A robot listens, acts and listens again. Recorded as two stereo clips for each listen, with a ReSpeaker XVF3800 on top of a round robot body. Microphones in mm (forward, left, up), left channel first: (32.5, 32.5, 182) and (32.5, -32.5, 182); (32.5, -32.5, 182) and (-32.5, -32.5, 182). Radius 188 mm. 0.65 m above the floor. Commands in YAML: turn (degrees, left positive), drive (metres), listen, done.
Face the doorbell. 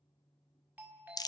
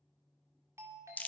turn: -150
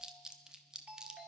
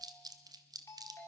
turn: -30
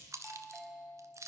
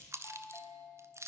turn: 10
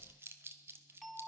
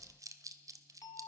done: "Found it: a doorbell, straight ahead, 2 to 4 m away."